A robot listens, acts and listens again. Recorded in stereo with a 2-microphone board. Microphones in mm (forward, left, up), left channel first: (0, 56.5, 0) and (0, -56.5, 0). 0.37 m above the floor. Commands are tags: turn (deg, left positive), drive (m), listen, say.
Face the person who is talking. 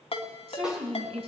<turn deg="-60"/>
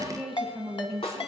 <turn deg="-10"/>
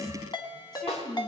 <say>Found it: a woman speaking, straight ahead, 2 to 4 m away.</say>